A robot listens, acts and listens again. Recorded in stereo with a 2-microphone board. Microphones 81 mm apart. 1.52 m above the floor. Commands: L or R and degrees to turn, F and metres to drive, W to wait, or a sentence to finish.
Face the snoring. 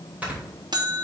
R20
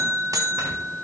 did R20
W
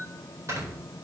R140
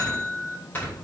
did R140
L25
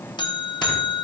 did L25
W
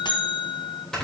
L10
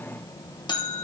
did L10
W
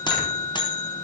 W
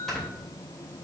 Facing the snoring.